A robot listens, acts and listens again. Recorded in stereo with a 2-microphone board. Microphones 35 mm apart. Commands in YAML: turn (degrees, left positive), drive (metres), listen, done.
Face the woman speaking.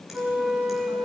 listen: true
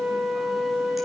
listen: true
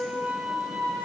done: "I can't make out a woman speaking to turn to."